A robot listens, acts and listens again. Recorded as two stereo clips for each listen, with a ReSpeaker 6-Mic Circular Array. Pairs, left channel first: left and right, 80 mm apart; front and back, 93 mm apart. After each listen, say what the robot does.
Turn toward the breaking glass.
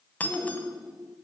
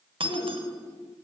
Turn 160° left.
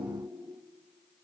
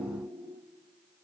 Facing where the breaking glass came from. I can't hear it now.